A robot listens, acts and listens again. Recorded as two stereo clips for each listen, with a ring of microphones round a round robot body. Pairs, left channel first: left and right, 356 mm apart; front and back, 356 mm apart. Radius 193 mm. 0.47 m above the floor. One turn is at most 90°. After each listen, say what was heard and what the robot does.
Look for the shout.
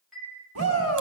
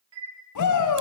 The shout: 35° right. Turn 35° right.
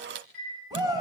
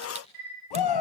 The shout is now 10° right. Turn 10° right.
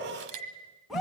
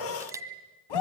Found it: a shout, straight ahead, over 4 m away.